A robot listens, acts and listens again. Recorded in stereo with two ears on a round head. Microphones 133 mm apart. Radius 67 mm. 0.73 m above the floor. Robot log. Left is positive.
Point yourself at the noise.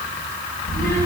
note: The child speaking: about 15° left or 165° left.
cmd yaw +15
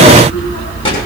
note: The child speaking: about 35° left or 145° left.
cmd yaw +35
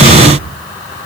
note: So it is at 110° left.
cmd yaw +110
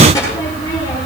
note: The child speaking is now 20° left.
cmd yaw +20
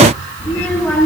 note: The child speaking is now 10° left.
cmd yaw +10
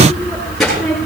end: Found it: a child speaking, straight ahead.